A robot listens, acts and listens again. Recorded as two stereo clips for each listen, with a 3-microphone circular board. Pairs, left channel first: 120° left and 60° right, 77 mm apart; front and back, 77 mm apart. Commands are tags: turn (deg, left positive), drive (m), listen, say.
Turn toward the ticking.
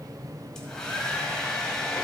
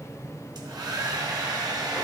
<listen/>
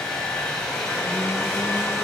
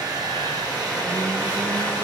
<listen/>
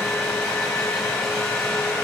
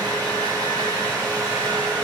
<say>I can't make out ticking, only a hair dryer and a blender.</say>